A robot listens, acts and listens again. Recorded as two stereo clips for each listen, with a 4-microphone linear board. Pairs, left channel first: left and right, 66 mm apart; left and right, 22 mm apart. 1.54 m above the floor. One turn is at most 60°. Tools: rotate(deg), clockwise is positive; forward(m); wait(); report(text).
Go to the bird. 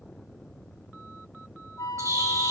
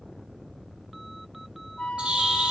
rotate(50)
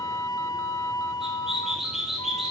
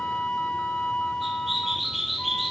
forward(1.0)
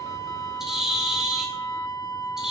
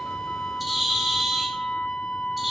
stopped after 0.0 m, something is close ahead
report("Blocked. The bird is further on, straight ahead.")